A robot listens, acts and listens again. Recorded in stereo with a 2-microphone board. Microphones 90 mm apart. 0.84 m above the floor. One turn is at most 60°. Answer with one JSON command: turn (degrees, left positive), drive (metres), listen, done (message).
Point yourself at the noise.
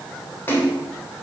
{"turn": 25}
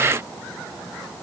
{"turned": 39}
{"listen": true}
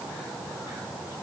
{"done": "I heard a splash, but can't make it out now. It was about 10° right or 115° left."}